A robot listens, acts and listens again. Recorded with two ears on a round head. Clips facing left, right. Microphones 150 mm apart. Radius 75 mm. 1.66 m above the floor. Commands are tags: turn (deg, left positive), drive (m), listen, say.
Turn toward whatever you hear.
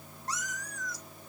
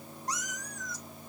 <turn deg="-20"/>
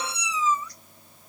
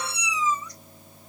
<turn deg="-15"/>
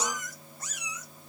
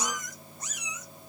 <turn deg="-20"/>
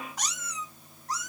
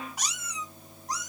<turn deg="-15"/>
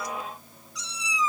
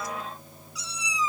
<turn deg="-30"/>
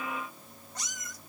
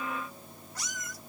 <turn deg="20"/>
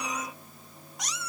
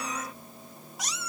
<say>Found it: a cat meowing, straight ahead, 2 to 4 m away.</say>